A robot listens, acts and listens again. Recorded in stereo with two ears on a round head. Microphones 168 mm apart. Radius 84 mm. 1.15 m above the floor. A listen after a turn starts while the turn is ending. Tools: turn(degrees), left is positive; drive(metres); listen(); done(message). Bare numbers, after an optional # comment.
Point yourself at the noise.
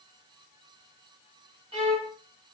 # The violin: about 30° right or 150° right.
turn(-30)
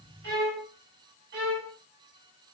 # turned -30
# So it is at 120° right.
turn(-120)
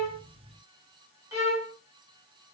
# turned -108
# The violin is now 15° right.
turn(-15)
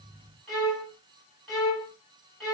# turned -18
done("Facing the violin, over 4 m away.")